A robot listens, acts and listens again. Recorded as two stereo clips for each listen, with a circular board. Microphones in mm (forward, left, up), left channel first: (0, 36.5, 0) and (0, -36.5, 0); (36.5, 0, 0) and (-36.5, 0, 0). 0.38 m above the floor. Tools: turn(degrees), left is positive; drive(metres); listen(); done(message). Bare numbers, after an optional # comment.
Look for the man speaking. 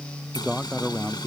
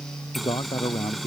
done("Found it: a man speaking, straight ahead.")